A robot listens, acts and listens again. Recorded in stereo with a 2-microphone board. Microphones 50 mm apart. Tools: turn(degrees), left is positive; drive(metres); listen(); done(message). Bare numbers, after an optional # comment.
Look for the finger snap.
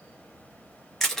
listen()
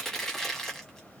listen()
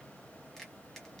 done("I can't make out a finger snap, only crushing.")